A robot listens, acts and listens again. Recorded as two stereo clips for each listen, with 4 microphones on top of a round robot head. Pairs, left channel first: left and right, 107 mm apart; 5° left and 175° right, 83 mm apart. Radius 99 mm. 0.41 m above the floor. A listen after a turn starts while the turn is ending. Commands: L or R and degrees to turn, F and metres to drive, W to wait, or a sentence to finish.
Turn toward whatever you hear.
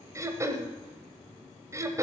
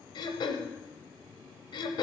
R30
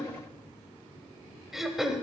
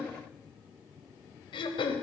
Facing the throat clearing.